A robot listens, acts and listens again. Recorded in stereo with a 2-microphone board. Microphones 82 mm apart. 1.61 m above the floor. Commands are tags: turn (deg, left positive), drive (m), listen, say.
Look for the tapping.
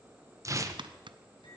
<turn deg="-75"/>
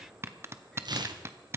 <turn deg="-30"/>
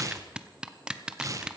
<turn deg="-10"/>
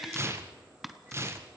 <say>Found it: tapping, straight ahead, under 1 m away.</say>